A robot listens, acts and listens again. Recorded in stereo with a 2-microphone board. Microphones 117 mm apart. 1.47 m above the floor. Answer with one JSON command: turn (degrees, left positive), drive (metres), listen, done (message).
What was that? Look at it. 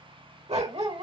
{"turn": -60}
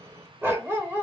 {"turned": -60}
{"turn": -25}
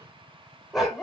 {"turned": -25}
{"done": "Facing the dog barking, 2 to 4 m away."}